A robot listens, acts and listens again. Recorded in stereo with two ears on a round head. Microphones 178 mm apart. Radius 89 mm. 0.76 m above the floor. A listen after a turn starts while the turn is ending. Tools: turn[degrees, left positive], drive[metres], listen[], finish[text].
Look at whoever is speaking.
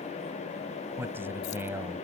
Action: turn[-30]
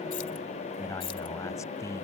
Thought: So it is at 15° left.
Action: turn[15]
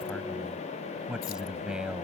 Action: finish[Found it: a man speaking, straight ahead.]